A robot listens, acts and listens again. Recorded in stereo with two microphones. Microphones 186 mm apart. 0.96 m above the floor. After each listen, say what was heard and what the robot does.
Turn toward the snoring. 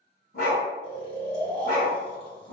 The snoring: about 30° left or 150° left. Turn 30° left.
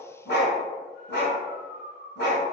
So it is at 120° left. Turn 120° left.
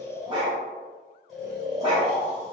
Facing the snoring.